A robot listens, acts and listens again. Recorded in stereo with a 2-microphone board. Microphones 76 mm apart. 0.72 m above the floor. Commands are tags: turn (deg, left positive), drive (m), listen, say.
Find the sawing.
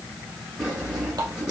<turn deg="-30"/>
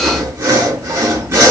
<turn deg="-140"/>
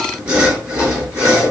<turn deg="-15"/>
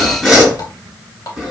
<say>Found it: sawing, straight ahead, over 4 m away.</say>